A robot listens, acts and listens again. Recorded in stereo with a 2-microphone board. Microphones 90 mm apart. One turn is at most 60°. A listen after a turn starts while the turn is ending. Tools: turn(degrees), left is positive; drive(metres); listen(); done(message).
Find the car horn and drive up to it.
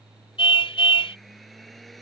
turn(degrees=60)
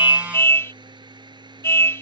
turn(degrees=30)
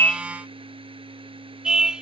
turn(degrees=-10)
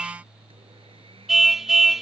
drive(metres=1.0)
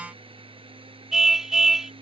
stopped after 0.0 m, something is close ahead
done("Blocked. The car horn is further on, straight ahead.")